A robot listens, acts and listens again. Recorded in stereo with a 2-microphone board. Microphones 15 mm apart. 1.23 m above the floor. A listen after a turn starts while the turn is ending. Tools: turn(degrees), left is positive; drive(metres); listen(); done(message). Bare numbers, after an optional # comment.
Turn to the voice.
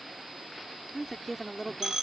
turn(-30)
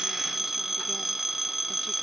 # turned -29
listen()
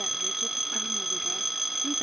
listen()
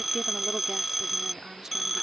done("I heard a woman speaking, but can't make it out now. It was about 25° left or 145° right.")